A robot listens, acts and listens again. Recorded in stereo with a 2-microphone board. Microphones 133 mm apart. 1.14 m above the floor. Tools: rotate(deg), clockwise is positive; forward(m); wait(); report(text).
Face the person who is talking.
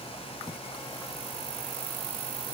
wait()
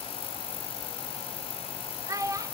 rotate(25)
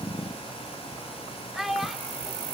report("Facing the child speaking.")